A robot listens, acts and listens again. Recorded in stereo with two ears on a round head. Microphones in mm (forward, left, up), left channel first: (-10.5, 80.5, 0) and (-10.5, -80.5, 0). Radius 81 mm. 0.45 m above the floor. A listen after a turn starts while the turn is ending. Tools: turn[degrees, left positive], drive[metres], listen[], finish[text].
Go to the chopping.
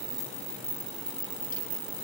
Action: listen[]
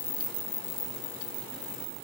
Action: listen[]
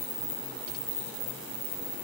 Action: finish[I can't make out chopping to turn to.]